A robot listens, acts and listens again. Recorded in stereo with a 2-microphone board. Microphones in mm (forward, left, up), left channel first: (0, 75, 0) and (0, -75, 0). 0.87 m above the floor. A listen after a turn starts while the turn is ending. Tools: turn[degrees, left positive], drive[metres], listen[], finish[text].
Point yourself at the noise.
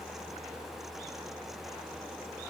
Action: listen[]
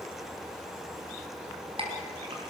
Thought: The clink: about 35° right or 145° right.
Action: turn[-35]
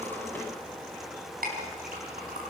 Thought: So it is at 110° right.
Action: turn[-110]
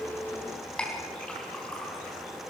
Action: finish[Facing the clink, over 4 m away.]